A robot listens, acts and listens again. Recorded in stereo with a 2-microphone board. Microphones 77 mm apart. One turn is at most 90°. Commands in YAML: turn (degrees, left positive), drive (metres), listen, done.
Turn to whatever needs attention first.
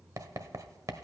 listen: true
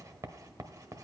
listen: true
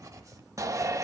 turn: -45
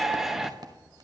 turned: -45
done: "Found it: a shout, straight ahead, under 1 m away."